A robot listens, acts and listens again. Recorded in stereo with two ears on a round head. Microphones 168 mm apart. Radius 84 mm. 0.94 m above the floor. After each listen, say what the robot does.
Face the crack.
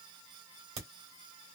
Turn 60° right.
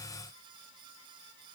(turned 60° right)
Keep listening.
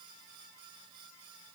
I heard a crack, but can't make it out now. It was about straight ahead or 60° right.